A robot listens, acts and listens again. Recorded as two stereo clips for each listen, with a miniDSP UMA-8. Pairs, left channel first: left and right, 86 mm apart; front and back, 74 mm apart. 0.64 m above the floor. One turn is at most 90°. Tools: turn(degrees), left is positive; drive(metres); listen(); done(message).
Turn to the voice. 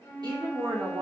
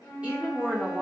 turn(degrees=-90)
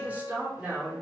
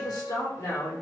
turn(degrees=-20)
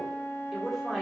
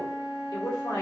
done("Facing the woman speaking, 1 to 2 m away.")